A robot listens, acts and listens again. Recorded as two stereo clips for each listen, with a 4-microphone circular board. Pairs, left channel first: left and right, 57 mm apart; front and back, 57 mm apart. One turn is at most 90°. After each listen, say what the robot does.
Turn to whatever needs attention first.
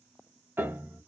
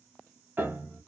Keep listening.
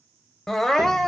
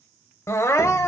Facing the crying, under 1 m away.